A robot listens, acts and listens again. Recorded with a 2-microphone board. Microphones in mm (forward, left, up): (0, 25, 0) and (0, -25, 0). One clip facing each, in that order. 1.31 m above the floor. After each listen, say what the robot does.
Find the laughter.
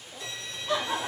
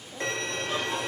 Turn 90° left.
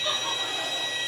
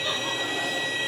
Keep listening.
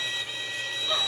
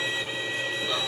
Keep listening.
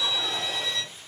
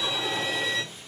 Facing where the laughter came from. I can't hear it now.